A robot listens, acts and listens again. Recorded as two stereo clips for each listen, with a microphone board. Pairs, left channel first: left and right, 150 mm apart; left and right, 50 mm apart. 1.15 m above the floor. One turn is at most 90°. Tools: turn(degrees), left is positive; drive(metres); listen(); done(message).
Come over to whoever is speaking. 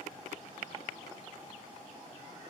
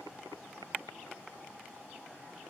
listen()
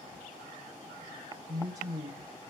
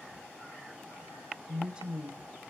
turn(degrees=-25)
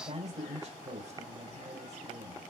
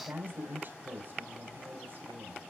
turn(degrees=-90)
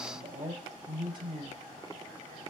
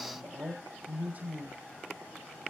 turn(degrees=-35)
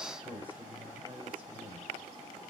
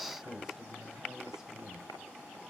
turn(degrees=-10)
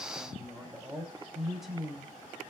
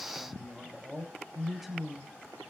drive(metres=1.0)
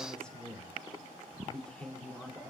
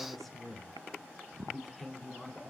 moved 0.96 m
drive(metres=1.0)
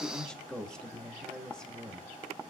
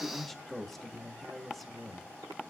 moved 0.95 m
drive(metres=1.0)
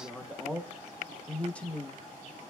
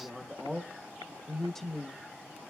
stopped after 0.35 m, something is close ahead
turn(degrees=10)
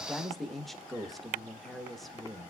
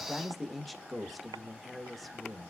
done("Arrived at the man speaking, straight ahead.")